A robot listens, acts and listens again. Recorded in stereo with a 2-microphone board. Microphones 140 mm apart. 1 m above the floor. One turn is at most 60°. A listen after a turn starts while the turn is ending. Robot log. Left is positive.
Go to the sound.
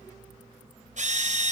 note: The drill: about 60° right or 120° right.
cmd yaw -60
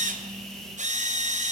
note: So it is at 60° right.
cmd yaw -60
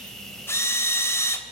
note: The drill is now 20° left.
cmd yaw +20
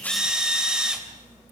cmd fwd 1.0
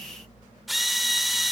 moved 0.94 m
cmd fwd 1.0
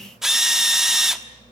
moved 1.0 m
cmd fwd 1.0
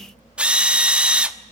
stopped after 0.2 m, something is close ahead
end: I am next to the drill.